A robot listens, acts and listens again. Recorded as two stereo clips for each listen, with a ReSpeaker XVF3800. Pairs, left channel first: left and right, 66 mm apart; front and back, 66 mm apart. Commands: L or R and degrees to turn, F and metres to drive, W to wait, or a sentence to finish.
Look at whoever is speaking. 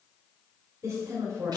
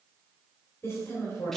R50
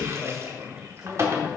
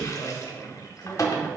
Facing the woman speaking.